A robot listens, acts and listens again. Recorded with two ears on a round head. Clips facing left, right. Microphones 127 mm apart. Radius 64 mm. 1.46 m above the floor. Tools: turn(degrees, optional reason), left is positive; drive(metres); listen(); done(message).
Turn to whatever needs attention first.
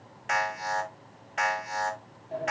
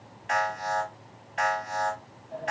turn(degrees=60, reason="The alarm: about 60° left or 120° left.")
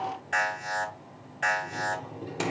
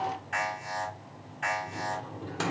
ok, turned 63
turn(degrees=55, reason="So it is at 55° left.")
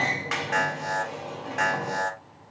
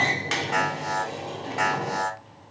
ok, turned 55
done("Facing the alarm.")